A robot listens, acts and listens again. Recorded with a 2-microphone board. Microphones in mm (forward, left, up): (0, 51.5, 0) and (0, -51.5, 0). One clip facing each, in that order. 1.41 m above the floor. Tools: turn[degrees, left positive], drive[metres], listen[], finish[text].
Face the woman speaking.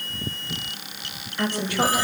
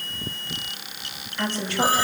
Action: turn[30]
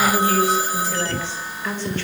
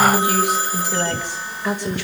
Thought: So it is at 10° right.
Action: turn[-10]
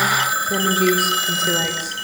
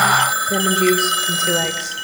Action: finish[Facing the woman speaking.]